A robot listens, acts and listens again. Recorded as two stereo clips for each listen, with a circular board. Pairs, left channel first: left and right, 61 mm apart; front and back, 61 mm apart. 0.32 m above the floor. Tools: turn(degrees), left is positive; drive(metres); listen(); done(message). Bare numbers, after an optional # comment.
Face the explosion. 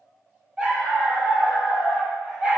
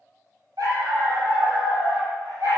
listen()
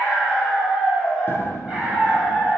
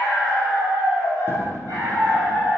# The explosion: 135° left.
turn(135)
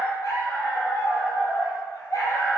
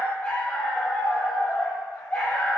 done("I heard an explosion from this way, but can't make it out now.")